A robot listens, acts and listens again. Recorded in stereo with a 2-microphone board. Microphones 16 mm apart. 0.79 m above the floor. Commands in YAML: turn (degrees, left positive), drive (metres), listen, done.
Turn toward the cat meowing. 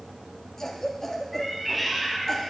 turn: 30
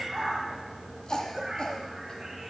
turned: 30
turn: -25
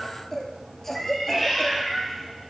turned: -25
turn: 15
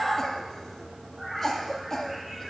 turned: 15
done: "Found it: a cat meowing, straight ahead, 1 to 2 m away."